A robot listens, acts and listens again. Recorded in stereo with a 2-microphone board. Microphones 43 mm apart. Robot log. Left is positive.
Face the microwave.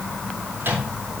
note: The microwave: about 60° right or 120° right.
cmd yaw -60
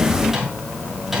end: Facing the microwave, over 4 m away.